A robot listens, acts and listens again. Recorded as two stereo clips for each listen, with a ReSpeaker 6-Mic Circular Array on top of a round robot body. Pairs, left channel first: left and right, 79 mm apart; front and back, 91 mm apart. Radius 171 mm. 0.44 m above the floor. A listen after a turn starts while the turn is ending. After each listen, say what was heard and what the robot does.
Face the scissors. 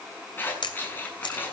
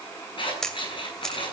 The scissors: 25° left. Turn 25° left.
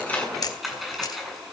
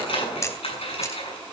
Facing the scissors.